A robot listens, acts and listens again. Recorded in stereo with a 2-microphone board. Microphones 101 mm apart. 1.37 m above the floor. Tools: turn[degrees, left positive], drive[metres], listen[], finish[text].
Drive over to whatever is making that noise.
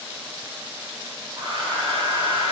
Thought: The hair dryer: about 65° right or 115° right.
Action: turn[-65]
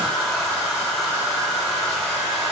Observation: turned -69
Action: drive[1.0]
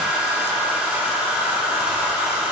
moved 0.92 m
Thought: The hair dryer is now 10° right.
Action: turn[-10]
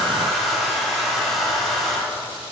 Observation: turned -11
Action: drive[1.0]
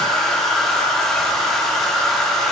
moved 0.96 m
Action: drive[1.0]
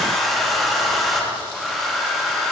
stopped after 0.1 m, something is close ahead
Action: finish[Arrived at the hair dryer, straight ahead.]